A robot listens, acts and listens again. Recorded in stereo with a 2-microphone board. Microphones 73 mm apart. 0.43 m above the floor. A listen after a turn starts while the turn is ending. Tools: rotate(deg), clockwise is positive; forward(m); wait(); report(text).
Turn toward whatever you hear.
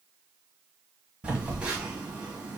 rotate(15)
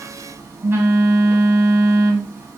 rotate(150)
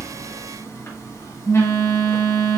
rotate(-40)
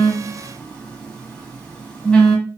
rotate(-15)
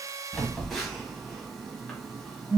report("Found it: a phone buzzing, straight ahead, 1 to 2 m away.")